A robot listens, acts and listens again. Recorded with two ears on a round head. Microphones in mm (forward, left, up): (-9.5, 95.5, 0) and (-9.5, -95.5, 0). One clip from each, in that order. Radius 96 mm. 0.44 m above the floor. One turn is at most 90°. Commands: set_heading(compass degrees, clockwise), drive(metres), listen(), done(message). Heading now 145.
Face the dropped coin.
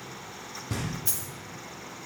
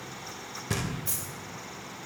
set_heading(125)
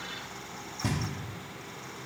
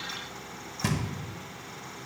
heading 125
listen()
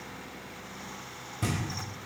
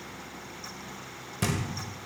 done("I heard a dropped coin, but can't make it out now. It was about straight ahead or 140° left.")